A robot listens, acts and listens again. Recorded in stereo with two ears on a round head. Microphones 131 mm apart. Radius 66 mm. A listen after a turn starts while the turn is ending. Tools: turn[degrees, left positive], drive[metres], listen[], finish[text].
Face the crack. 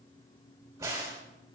Thought: The crack: about 20° right or 160° right.
Action: turn[-20]
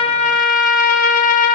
Action: listen[]
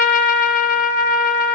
Action: finish[I heard a crack, but can't make it out now. It was about straight ahead or 140° right.]